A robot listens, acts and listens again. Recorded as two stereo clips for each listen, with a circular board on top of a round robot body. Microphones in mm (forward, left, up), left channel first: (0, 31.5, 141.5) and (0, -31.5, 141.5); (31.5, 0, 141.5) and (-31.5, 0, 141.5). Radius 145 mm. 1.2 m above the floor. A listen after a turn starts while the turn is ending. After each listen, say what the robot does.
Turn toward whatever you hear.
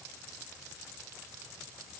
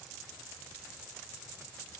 Keep listening.
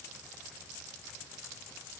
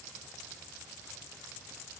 Keep listening.
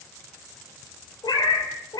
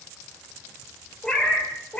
Turn 75° left.
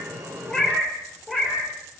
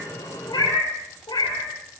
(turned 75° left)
Facing the cat meowing, over 4 m away.